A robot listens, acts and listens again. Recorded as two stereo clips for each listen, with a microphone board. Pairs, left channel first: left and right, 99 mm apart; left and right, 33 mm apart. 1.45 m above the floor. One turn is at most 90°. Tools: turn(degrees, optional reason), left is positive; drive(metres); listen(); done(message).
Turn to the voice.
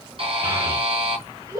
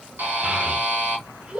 turn(degrees=-30, reason="The child speaking: about 30° right or 150° right.")
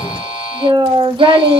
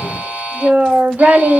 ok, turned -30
turn(degrees=-90, reason="So it is at 120° right.")
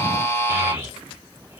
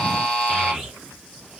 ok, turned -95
turn(degrees=-25, reason="Nothing new. It was at 25° right.")
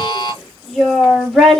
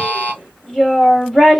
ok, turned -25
done("Found it: a child speaking, straight ahead, 2 to 4 m away.")